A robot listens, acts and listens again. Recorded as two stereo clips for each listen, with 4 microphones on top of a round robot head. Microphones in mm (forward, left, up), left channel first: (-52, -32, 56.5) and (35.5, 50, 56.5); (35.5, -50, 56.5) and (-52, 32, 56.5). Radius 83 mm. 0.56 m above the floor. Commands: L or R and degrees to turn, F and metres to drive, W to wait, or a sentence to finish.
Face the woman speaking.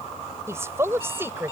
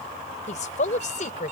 R30
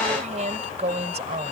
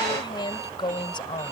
L10
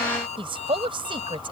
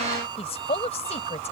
Facing the woman speaking.